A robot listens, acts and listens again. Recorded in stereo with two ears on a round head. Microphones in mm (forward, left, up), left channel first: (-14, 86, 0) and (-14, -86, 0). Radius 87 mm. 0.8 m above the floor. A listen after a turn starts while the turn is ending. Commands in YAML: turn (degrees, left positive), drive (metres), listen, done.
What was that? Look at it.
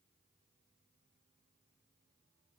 listen: true
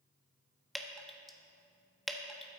turn: 30
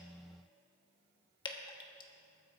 turn: 150
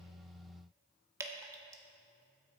turn: -20
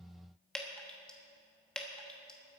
done: "Facing the dripping."